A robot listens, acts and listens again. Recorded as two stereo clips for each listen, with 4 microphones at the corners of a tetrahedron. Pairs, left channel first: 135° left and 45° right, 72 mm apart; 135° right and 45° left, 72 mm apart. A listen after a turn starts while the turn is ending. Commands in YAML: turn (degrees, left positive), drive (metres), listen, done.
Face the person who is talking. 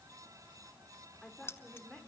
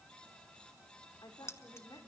turn: -140
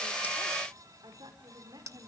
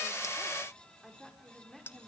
turn: -45
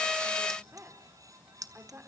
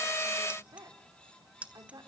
turn: 15
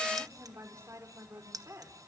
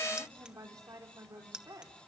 done: "Facing the woman speaking, over 4 m away."